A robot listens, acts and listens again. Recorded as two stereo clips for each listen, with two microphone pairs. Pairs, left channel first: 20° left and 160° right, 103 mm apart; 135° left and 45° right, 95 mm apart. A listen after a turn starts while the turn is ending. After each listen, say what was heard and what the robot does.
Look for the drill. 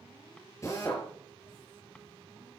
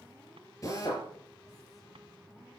The drill: 80° left. Turn 80° left.
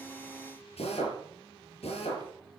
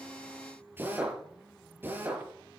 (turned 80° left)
The drill is now 25° left. Turn 25° left.
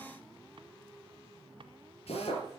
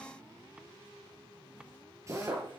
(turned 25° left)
The drill is now 15° left. Turn 15° left.
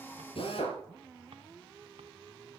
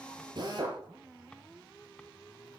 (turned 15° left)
Found it: a drill, straight ahead.